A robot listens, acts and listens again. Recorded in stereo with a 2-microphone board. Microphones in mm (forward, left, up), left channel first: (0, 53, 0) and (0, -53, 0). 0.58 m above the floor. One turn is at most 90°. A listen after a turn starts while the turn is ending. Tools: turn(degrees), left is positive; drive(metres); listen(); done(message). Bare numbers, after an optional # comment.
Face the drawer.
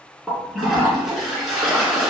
listen()
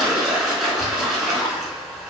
listen()
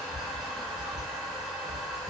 done("I can't make out a drawer, only a toilet flushing.")